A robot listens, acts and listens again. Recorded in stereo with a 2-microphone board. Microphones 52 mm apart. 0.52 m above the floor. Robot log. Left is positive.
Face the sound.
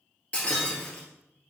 note: The breaking glass: about 25° left or 155° left.
cmd yaw +25
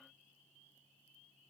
cmd idle
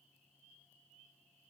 end: I heard breaking glass, but can't make it out now. It was about straight ahead or 130° left.